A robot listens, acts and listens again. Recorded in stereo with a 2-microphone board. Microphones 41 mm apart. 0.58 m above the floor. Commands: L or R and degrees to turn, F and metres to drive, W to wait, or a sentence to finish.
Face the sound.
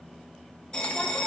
L25
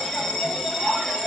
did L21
Found it: a bell, straight ahead.